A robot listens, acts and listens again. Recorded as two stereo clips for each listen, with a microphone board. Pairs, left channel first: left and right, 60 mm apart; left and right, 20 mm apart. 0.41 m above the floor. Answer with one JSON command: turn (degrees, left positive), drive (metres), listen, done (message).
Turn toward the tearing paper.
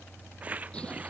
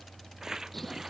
{"turn": -30}
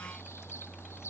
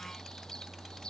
{"listen": true}
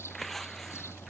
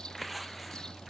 {"done": "Facing the tearing paper."}